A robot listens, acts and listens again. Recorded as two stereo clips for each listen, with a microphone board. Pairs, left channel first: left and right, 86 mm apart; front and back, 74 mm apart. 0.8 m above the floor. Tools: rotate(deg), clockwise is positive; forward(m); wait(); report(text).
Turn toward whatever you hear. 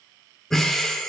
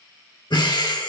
report("Facing the breathing, under 1 m away.")